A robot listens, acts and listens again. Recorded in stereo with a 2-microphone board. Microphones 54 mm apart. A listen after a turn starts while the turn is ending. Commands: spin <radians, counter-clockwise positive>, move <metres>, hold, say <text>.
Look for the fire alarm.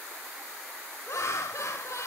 hold
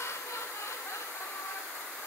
hold
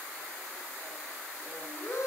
say I can't make out a fire alarm to turn to.